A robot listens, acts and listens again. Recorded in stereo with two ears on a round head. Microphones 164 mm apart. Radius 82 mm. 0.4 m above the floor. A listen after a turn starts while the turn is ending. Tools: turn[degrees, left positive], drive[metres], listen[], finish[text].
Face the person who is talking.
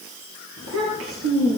Action: turn[-90]
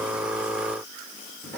Thought: So it is at 10° left.
Action: turn[10]
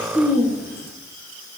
Action: finish[Facing the child speaking.]